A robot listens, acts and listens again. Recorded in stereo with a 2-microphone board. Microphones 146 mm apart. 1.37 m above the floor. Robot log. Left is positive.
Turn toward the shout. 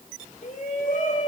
note: The shout: about 60° left or 120° left.
cmd yaw +60
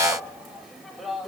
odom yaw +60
end: Facing the shout, over 4 m away.